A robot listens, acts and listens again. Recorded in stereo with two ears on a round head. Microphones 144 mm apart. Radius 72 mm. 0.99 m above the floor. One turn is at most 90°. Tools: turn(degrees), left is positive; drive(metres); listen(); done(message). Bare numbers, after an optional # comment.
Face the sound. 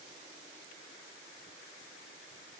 listen()
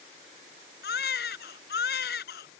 # The baby crying: about 70° left or 110° left.
turn(70)
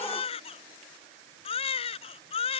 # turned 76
# So it is at 35° left.
turn(35)
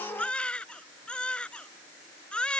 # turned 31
done("Facing the baby crying.")